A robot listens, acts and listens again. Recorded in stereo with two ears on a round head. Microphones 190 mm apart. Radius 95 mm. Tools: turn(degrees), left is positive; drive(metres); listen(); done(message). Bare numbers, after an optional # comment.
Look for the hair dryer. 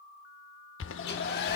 # The hair dryer: about 50° left or 130° left.
turn(50)
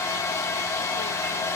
# So it is at 15° left.
turn(15)
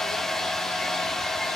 done("Found it: a hair dryer, straight ahead, 1 to 2 m away.")